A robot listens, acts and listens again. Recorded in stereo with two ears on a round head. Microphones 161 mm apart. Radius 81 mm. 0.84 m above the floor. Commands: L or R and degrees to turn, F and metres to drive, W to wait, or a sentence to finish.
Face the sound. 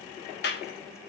L60
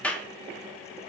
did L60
L10
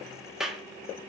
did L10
Facing the clap, 1 to 2 m away.